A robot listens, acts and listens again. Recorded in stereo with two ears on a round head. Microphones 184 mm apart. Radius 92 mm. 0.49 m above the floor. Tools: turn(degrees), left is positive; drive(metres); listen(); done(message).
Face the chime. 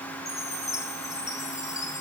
turn(degrees=15)
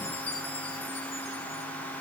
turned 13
turn(degrees=150)
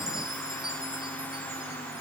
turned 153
listen()
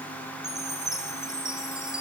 done("Facing the chime.")